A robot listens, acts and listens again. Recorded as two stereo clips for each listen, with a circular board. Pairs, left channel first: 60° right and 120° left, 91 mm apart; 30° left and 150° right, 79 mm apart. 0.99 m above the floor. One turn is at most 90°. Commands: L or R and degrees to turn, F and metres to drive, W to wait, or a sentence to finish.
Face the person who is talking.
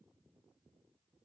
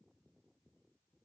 W
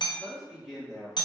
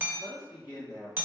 L25
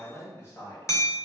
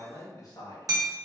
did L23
R10
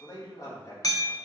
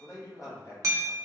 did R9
R20
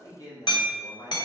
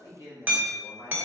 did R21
R20
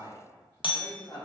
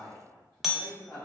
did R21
Facing the man speaking, 1 to 2 m away.